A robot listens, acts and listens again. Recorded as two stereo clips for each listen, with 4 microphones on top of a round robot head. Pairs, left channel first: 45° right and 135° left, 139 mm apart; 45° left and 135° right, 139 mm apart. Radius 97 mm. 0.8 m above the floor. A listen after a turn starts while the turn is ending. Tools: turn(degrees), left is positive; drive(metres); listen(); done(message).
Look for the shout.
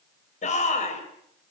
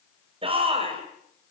turn(degrees=-85)
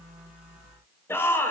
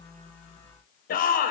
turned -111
turn(degrees=30)
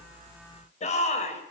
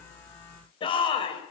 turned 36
turn(degrees=-10)
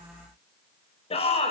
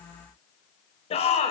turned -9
done("Found it: a shout, straight ahead, over 4 m away.")